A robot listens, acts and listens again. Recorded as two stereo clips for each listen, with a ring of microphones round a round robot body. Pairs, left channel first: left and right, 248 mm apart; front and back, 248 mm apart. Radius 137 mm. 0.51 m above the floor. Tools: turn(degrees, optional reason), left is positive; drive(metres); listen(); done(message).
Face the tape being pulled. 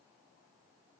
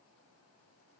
listen()
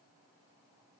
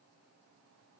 listen()
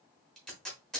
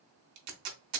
turn(degrees=180, reason="The tape being pulled: straight behind.")
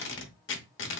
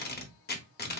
turn(degrees=50, reason="The tape being pulled is now 50° left.")
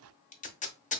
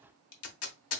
turn(degrees=30, reason="The tape being pulled is now 30° left.")
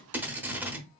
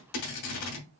done("Facing the tape being pulled.")